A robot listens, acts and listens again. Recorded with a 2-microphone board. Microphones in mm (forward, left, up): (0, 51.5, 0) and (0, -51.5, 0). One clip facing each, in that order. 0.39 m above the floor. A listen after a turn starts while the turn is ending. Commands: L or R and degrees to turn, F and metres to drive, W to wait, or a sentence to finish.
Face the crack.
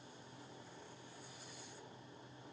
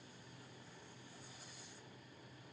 W
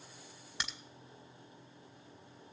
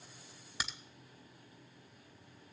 R30
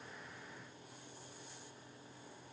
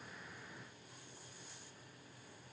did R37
W
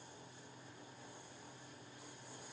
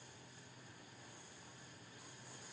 I heard a crack, but can't make it out now. It was about 35° left or 140° right.